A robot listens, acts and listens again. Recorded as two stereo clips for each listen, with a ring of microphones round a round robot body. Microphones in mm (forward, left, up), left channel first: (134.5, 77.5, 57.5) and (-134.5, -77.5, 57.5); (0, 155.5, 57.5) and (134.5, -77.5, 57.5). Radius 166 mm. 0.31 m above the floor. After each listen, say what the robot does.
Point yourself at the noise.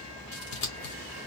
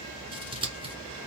Turn 10° left.
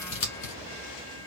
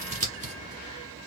Found it: scissors, straight ahead, 1 to 2 m away.